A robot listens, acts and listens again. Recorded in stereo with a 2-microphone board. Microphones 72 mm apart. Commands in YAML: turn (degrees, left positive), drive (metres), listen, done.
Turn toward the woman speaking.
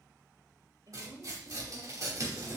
turn: -70
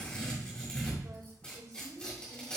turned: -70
turn: -60
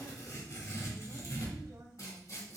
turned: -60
listen: true
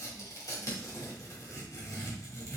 listen: true
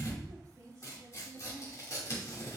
turn: -35
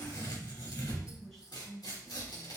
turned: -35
done: "Facing the woman speaking, 2 to 4 m away."